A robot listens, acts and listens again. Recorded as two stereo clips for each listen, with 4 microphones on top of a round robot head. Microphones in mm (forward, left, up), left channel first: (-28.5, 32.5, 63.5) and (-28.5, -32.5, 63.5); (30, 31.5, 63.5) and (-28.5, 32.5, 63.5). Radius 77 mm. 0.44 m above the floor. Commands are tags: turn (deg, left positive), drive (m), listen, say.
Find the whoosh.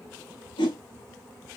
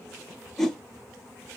<turn deg="85"/>
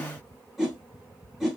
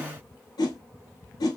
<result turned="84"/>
<say>Facing the whoosh.</say>